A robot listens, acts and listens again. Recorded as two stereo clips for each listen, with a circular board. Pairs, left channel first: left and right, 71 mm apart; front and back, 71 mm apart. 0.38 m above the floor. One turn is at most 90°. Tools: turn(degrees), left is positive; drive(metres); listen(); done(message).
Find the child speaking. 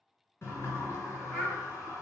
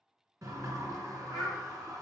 turn(degrees=20)
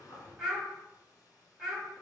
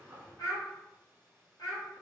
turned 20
done("Found it: a child speaking, straight ahead, 1 to 2 m away.")